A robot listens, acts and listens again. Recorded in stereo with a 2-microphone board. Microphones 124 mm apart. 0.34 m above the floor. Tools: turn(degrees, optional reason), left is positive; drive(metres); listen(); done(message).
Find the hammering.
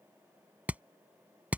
turn(degrees=-30)
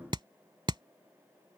turn(degrees=-140, reason="So it is at 140° right.")
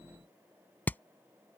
turn(degrees=15, reason="The hammering is now 15° left.")
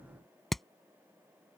done("Facing the hammering.")